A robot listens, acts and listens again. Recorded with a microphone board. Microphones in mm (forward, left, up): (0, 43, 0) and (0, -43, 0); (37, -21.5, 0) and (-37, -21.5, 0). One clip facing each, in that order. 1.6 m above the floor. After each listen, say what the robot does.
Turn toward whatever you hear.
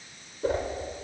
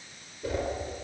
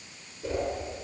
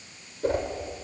Turn 140° left.
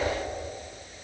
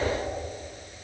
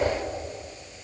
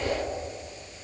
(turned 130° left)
Turn 10° left.
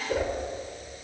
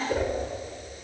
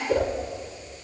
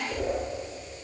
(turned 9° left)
Facing the whoosh, over 4 m away.